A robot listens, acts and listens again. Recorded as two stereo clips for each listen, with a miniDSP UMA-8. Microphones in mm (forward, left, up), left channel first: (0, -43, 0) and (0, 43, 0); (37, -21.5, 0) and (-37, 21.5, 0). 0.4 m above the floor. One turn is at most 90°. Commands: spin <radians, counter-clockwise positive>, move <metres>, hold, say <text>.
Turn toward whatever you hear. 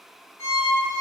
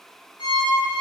spin -0.61
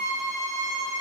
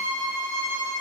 say Found it: a violin, straight ahead, 1 to 2 m away.